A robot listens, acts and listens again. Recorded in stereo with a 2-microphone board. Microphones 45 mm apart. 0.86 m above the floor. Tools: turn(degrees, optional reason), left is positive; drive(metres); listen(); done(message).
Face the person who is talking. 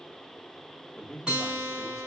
turn(degrees=30)
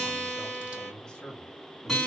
turn(degrees=30)
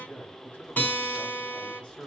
turn(degrees=160, reason="So it is at 160° left.")
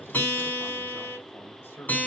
turn(degrees=55, reason="The man speaking is now 55° left.")
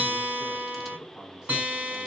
turn(degrees=-10, reason="The man speaking is now 10° right.")
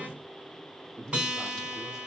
done("Found it: a man speaking, straight ahead.")